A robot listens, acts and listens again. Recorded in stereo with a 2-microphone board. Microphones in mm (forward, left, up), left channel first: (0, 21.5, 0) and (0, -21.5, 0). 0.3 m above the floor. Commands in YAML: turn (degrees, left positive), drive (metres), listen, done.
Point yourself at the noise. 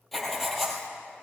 turn: 30
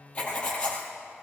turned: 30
turn: 150
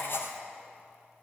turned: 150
turn: 55
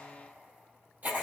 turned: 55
turn: -40
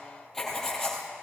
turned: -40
turn: 10
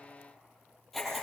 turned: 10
done: "Found it: writing, straight ahead."